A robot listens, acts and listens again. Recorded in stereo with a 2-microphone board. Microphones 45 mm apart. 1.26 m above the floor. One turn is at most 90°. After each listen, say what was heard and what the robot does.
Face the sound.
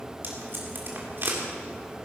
The tape being pulled: about 55° right or 125° right. Turn 55° right.
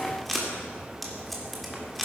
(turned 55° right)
Facing the tape being pulled, 2 to 4 m away.